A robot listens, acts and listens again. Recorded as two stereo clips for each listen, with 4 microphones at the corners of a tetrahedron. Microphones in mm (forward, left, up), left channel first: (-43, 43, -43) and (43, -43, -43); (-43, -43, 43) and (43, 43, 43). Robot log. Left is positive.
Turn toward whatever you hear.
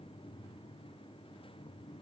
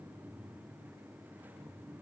cmd idle
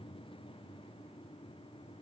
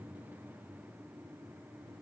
cmd idle
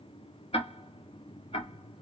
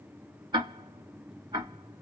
note: The ticking: 100° left.
cmd yaw +100
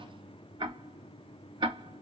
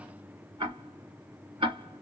end: Facing the ticking.